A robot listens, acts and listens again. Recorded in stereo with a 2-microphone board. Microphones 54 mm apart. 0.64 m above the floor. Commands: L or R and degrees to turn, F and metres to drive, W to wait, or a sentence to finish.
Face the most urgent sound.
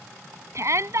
R60
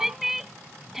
Found it: a shout, straight ahead.